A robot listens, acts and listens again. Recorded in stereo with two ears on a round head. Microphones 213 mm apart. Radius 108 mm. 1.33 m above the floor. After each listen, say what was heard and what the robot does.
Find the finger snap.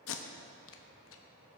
Keep listening.
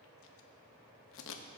Keep listening.
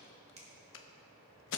The finger snap: about 25° right or 155° right. Turn 25° right.
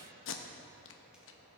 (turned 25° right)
Keep listening.
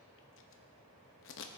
Keep listening.
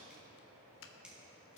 I heard a finger snap, but can't make it out now. It was about straight ahead or 130° right.